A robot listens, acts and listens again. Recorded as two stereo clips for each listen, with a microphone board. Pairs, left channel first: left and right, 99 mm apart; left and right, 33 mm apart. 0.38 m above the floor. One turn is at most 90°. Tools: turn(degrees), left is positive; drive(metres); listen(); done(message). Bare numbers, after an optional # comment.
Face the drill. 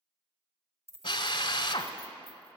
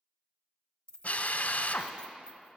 # The drill: about 55° left or 125° left.
turn(55)
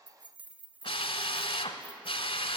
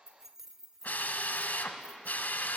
# So it is at 70° left.
turn(70)
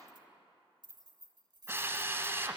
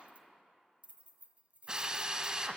# The drill is now 25° right.
turn(-25)
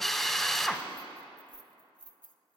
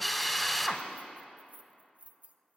done("Found it: a drill, straight ahead, under 1 m away.")